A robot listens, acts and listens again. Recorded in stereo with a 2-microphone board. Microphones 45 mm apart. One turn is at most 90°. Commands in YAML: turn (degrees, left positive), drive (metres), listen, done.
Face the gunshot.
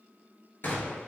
turn: 50
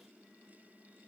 listen: true
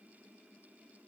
done: "I heard a gunshot, but can't make it out now. It was about straight ahead or 80° left."